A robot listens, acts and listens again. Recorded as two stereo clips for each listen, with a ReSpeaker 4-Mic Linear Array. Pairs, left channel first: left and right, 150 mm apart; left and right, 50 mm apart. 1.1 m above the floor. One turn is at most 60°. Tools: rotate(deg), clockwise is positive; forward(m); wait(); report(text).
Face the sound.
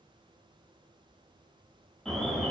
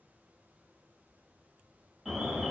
rotate(-30)
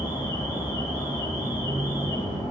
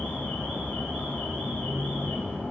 rotate(-60)
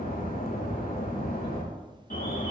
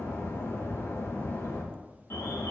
rotate(-60)
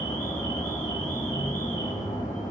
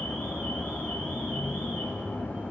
rotate(-25)
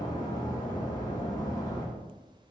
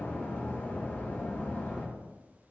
rotate(-30)
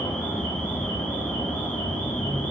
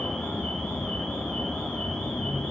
rotate(-10)
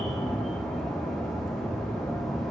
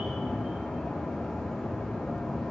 report("Facing the alarm, 2 to 4 m away.")